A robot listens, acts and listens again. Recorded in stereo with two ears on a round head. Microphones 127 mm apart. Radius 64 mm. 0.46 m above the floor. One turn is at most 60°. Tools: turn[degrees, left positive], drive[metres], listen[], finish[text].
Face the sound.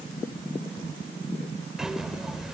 Action: turn[-30]
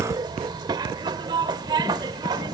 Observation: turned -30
Thought: So it is at 145° right.
Action: turn[-60]
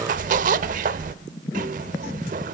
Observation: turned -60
Thought: The zipper is now 70° right.
Action: turn[-60]
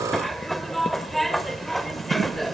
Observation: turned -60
Action: finish[Facing the zipper, under 1 m away.]